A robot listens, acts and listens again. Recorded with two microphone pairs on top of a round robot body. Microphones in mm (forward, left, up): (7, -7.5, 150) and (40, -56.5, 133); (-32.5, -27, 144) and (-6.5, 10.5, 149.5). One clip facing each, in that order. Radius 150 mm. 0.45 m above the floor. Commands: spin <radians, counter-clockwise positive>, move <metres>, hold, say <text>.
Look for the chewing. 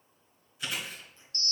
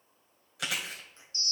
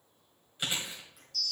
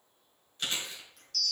spin -0.87
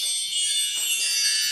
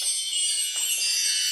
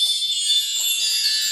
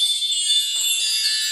hold
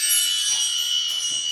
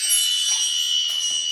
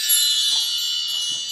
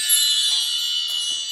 hold
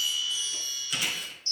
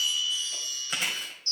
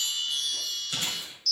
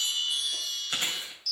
say Facing the chewing.